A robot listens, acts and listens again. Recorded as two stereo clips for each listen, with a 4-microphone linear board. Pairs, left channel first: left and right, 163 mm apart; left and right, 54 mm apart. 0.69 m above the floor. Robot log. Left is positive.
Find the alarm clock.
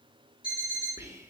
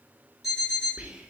cmd yaw -30
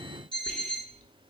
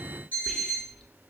note: So it is at 145° right.
cmd yaw -145
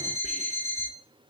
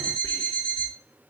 note: The alarm clock is now 30° right.
cmd yaw -30
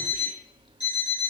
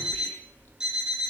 note: The alarm clock is now 10° right.
cmd yaw -10
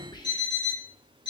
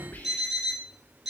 end: Facing the alarm clock, 2 to 4 m away.